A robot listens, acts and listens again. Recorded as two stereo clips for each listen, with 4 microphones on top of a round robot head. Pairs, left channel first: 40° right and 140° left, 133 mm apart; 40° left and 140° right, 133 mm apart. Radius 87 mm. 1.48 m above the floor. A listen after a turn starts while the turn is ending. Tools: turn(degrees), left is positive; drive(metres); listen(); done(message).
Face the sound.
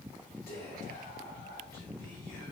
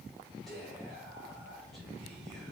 turn(degrees=-50)
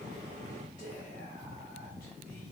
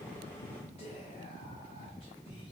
turn(degrees=-10)
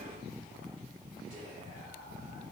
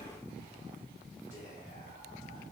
listen()
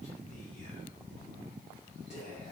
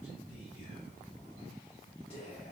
done("Facing the whispering, 1 to 2 m away.")